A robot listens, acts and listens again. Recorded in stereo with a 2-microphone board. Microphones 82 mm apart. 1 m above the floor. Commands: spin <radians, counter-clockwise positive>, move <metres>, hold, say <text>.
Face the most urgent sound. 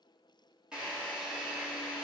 hold
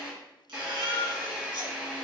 spin -1.57
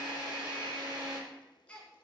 spin 0.17
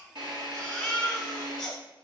say Found it: a baby crying, straight ahead, 2 to 4 m away.